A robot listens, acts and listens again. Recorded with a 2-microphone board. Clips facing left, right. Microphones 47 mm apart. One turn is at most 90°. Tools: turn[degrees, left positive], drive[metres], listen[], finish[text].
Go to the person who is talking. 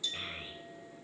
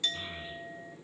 Thought: The child speaking: about 65° left or 115° left.
Action: turn[65]
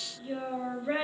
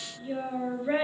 Action: drive[1.0]
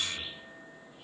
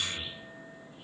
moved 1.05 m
Action: drive[1.0]
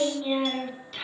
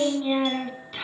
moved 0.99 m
Thought: The child speaking is now 10° right.
Action: turn[-10]
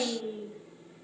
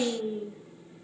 Action: drive[1.0]
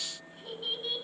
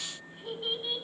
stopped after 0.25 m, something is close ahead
Action: finish[I am next to the child speaking.]